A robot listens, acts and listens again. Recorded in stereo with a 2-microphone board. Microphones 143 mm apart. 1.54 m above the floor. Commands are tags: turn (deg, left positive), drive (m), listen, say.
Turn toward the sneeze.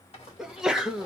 <turn deg="-30"/>
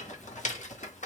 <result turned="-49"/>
<listen/>
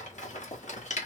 <say>I heard a sneeze, but can't make it out now. It was about 45° left or 125° right.</say>